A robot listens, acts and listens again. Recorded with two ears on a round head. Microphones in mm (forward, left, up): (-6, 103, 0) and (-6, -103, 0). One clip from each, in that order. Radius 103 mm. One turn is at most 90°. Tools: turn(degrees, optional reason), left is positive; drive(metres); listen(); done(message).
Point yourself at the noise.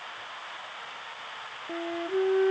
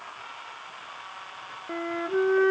turn(degrees=-60, reason="The flute: about 60° right or 120° right.")
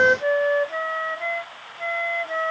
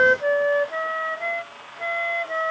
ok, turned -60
done("Found it: a flute, straight ahead.")